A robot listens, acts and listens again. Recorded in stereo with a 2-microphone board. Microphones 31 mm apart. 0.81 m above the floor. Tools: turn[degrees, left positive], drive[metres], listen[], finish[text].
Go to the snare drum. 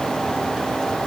Action: listen[]
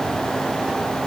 Action: listen[]
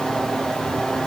Action: finish[I can't make out a snare drum.]